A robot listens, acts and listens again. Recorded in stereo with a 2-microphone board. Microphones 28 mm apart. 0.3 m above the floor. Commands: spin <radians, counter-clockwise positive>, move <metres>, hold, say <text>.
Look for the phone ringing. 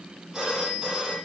spin -0.35
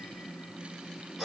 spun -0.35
say Found it: a phone ringing, straight ahead, over 4 m away.